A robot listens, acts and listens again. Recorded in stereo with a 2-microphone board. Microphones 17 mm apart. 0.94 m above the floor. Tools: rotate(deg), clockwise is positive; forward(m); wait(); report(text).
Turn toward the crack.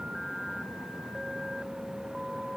wait()
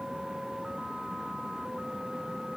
wait()
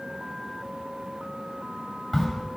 rotate(-30)
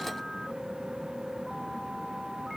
wait()
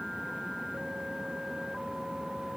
report("I heard a crack, but can't make it out now. It was about 25° right or 145° left.")